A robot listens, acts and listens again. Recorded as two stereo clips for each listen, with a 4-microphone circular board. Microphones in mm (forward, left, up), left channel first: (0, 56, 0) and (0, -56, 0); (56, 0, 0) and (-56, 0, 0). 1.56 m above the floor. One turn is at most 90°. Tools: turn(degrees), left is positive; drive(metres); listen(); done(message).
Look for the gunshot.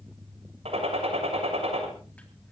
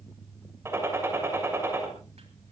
turn(degrees=-90)
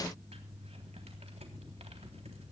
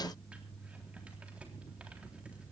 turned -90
turn(degrees=-25)
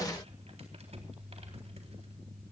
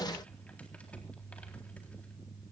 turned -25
done("Facing where the gunshot came from. I can't hear it now.")